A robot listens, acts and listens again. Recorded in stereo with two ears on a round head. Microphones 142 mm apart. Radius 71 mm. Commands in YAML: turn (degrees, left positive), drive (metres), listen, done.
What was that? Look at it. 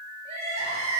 turn: -40
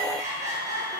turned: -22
turn: -20
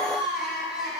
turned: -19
done: "Found it: crying, straight ahead, over 4 m away."